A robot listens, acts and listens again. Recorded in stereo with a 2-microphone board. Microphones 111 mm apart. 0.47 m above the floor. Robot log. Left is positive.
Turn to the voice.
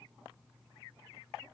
cmd idle
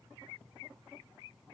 cmd idle
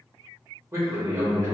note: The man speaking: about 25° right or 155° right.
cmd yaw -25
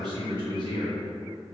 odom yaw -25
note: So it is at 120° right.
cmd yaw -120
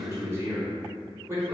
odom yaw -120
note: The man speaking is now 30° right.
cmd yaw -30
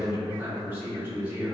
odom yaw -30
note: The man speaking is now 20° right.
cmd yaw -20
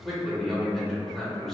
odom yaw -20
end: Found it: a man speaking, straight ahead.